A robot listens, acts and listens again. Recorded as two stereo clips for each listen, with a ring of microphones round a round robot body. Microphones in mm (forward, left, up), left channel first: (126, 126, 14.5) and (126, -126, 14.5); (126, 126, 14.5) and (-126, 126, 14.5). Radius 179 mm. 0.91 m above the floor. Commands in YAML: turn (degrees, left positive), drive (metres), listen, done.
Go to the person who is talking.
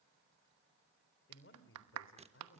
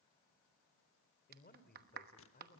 turn: 50
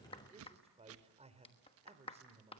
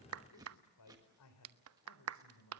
turn: -25
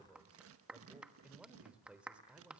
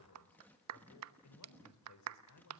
drive: 1.0
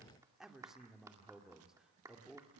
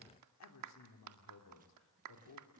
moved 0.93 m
drive: 1.0
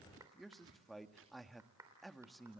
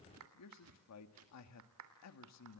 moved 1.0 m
drive: 1.0
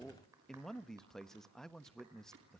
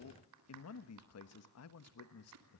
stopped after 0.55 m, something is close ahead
done: "Arrived at the man speaking, straight ahead."